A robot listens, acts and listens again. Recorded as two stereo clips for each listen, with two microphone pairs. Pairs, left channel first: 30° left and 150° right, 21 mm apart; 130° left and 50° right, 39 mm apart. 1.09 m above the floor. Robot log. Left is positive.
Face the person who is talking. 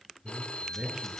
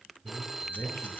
note: The man speaking: 145° left.
cmd yaw +145
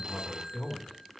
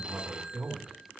end: Found it: a man speaking, straight ahead.